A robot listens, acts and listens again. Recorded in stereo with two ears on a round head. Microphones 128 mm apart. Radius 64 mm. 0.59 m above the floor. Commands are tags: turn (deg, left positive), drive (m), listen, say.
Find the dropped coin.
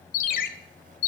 <listen/>
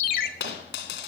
<turn deg="90"/>
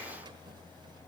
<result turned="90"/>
<say>I heard a dropped coin from this way, but can't make it out now.</say>